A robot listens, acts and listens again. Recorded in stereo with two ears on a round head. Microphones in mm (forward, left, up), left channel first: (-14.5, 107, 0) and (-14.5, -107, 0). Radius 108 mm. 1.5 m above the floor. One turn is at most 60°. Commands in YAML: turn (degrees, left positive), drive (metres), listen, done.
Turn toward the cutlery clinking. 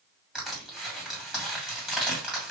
listen: true
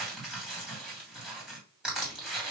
listen: true
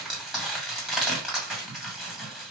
done: "I can't make out cutlery clinking, only crushing."